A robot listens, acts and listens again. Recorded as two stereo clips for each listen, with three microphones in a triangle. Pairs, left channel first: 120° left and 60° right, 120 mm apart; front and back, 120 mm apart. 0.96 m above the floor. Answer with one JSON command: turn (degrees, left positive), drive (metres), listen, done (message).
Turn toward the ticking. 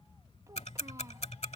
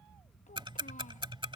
{"turn": 135}
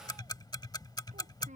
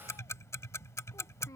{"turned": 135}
{"turn": 65}
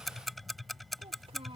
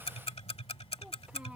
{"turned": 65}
{"turn": 30}
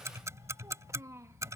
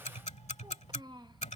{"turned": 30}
{"done": "Found it: ticking, straight ahead."}